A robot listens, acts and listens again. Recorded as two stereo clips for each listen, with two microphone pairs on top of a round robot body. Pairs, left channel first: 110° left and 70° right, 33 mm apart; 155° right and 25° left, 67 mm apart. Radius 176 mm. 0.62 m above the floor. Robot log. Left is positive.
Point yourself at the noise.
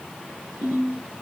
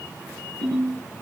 note: The ringtone: 85° right.
cmd yaw -85
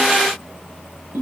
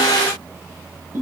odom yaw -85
note: The ringtone is now 25° right.
cmd yaw -25
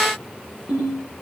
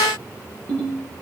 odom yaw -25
end: Facing the ringtone.